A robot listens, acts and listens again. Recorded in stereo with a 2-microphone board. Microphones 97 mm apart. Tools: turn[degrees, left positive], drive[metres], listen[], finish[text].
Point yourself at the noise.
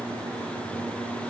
Action: listen[]
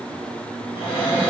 Thought: The cupboard door: about 60° left or 120° left.
Action: turn[60]
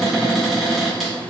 Action: finish[Found it: a cupboard door, straight ahead, 1 to 2 m away.]